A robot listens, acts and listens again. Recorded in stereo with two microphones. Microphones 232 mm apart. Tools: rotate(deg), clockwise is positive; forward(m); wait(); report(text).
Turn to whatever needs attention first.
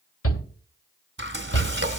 rotate(-75)
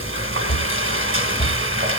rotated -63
rotate(-20)
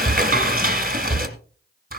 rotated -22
report("Found it: a shout, straight ahead, 1 to 2 m away.")